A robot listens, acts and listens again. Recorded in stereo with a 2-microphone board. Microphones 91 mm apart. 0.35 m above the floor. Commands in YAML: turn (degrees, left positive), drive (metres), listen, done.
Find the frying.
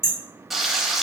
turn: 30
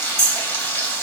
turn: 155
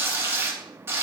turn: -30
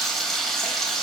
done: "Facing the frying, under 1 m away."